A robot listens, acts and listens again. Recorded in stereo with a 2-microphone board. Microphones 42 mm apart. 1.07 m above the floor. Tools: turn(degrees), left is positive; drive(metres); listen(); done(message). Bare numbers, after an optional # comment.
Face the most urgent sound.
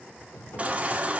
# The baby crying: about 30° right or 150° right.
turn(-30)
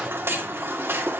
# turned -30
# So it is at 115° right.
turn(-115)
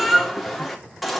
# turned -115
done("Found it: a baby crying, straight ahead, 2 to 4 m away.")